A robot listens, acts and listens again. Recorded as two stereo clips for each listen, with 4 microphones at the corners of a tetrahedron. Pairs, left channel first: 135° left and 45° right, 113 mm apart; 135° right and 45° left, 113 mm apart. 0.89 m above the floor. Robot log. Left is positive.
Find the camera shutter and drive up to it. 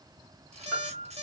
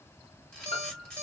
note: The camera shutter: 55° right.
cmd yaw -55
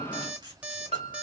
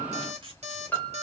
cmd fwd 1.0
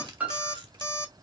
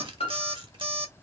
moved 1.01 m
cmd fwd 1.0
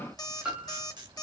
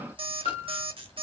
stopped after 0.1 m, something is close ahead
end: Arrived at the camera shutter, straight ahead.